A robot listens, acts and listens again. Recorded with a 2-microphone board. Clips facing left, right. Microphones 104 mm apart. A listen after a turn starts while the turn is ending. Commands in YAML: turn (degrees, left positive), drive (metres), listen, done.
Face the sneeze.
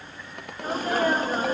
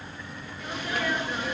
turn: 40
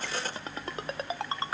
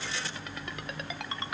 listen: true
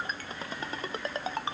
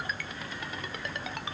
done: "I heard a sneeze, but can't make it out now. It was about straight ahead or 100° left."